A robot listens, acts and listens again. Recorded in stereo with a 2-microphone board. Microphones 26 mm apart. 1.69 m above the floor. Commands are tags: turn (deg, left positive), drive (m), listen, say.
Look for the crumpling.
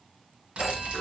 <turn deg="-55"/>
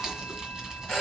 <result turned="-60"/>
<turn deg="-35"/>
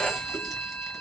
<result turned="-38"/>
<listen/>
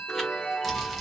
<say>Facing the crumpling.</say>